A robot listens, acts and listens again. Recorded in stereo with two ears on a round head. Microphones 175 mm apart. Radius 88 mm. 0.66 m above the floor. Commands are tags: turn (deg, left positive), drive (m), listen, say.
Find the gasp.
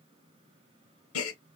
<turn deg="90"/>
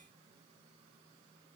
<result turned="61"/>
<turn deg="30"/>
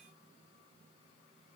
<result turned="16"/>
<turn deg="15"/>
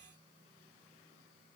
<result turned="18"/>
<say>I heard a gasp from this way, but can't make it out now.</say>